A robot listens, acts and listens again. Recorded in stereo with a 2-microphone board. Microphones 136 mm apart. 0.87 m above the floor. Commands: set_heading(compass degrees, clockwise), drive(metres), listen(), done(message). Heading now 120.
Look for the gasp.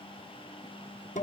listen()
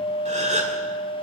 set_heading(180)
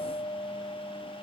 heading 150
listen()
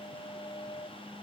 done("I heard a gasp, but can't make it out now. It was about 30° right or 90° right.")